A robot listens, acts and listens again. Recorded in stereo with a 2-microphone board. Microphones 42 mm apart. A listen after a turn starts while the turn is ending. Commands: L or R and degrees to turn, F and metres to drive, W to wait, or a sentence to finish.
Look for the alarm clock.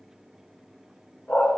W
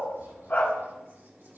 W
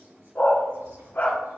I can't make out an alarm clock, only a dog barking.